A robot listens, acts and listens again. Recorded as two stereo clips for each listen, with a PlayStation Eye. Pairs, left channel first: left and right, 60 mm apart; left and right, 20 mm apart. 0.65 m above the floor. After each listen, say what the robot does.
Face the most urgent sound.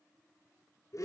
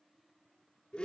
Keep listening.
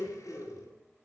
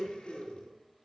Keep listening.
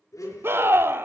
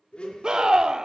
Turn 40° right.
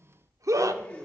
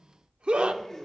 Turn 90° right.
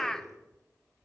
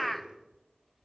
Turn 10° left.
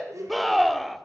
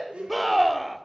Found it: a scream, straight ahead.